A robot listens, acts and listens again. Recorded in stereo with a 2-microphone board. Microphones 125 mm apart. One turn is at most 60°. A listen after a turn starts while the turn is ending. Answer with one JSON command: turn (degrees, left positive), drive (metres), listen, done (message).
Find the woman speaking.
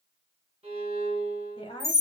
{"turn": 50}
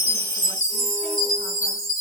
{"listen": true}
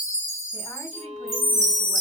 {"listen": true}
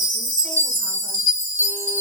{"done": "I heard a woman speaking, but can't make it out now. It was about straight ahead or 80° left."}